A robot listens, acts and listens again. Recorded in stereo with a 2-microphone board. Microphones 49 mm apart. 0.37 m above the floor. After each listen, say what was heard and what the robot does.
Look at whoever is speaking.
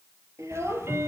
Turn 90° right.
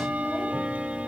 Keep listening.
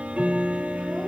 Keep listening.
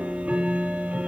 I heard a child speaking from this way, but can't make it out now.